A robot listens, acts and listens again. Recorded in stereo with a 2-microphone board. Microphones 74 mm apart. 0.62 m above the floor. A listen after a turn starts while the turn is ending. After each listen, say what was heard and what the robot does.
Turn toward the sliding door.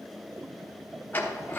The sliding door: about 25° left or 155° left. Turn 25° left.
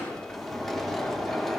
Facing the sliding door, under 1 m away.